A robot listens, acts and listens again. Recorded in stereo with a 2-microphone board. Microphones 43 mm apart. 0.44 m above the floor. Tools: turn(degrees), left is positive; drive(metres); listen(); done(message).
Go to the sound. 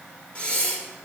turn(degrees=25)
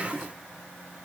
listen()
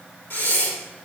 turn(degrees=130)
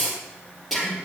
drive(metres=1.0)
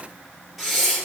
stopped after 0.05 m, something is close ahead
done("Something is in my way. I am facing the breathing but have not reached it.")